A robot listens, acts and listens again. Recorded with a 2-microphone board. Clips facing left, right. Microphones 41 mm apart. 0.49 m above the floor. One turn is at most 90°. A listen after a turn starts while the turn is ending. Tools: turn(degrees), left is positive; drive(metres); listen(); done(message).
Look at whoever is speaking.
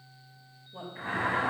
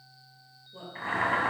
turn(degrees=30)
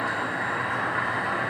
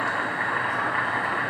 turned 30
listen()
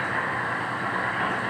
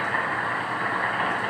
listen()
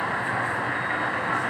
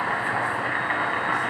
done("I heard a woman speaking, but can't make it out now. It was about 15° right or 135° left.")